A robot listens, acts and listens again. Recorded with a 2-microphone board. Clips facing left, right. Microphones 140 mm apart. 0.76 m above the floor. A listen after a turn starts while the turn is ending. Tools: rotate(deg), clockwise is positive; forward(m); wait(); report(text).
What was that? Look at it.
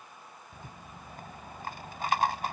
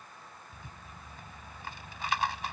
rotate(-45)
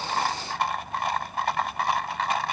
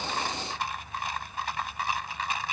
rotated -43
rotate(-85)
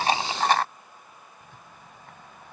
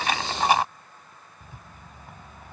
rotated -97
rotate(10)
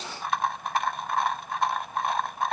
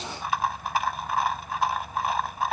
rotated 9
report("Facing the rattle.")